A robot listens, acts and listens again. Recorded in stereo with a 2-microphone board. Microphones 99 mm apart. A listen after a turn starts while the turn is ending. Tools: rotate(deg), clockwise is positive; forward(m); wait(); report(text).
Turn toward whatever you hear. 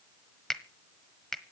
rotate(-30)
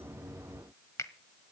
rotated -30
rotate(-145)
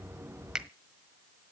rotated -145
rotate(10)
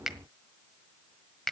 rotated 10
report("Facing the finger snap.")